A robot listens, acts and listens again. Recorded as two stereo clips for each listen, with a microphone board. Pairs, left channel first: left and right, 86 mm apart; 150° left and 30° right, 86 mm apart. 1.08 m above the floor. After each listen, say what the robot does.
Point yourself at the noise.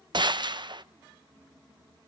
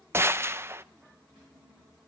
Turn 85° right.
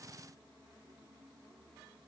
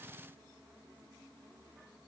I heard a gunshot from this way, but can't make it out now.